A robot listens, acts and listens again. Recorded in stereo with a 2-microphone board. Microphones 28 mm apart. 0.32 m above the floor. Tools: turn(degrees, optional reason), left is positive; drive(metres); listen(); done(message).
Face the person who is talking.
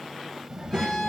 turn(degrees=-35, reason="The child speaking: about 35° right or 145° right.")
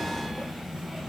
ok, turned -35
turn(degrees=-10, reason="So it is at 10° right.")
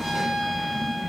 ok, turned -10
done("Facing the child speaking, under 1 m away.")